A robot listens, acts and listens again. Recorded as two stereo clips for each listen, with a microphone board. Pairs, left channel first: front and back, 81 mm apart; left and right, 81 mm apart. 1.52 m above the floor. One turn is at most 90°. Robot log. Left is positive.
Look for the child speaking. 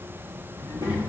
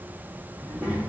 note: The child speaking: 165° right.
cmd yaw -90
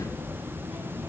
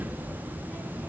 note: The child speaking is now 110° right.
cmd yaw -90
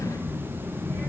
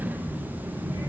note: The child speaking is now 40° right.
cmd yaw -40
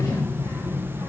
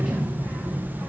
note: The child speaking is now 15° right.
cmd yaw -15
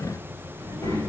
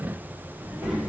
note: The child speaking is now 10° right.
cmd yaw -10
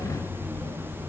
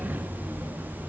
end: Found it: a child speaking, straight ahead, 2 to 4 m away.